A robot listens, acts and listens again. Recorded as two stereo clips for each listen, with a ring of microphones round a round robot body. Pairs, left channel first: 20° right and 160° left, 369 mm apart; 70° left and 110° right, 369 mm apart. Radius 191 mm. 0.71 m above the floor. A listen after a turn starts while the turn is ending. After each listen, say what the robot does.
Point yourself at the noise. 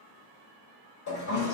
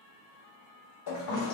Turn 30° left.
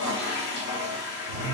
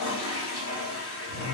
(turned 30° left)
Found it: a toilet flushing, straight ahead, 1 to 2 m away.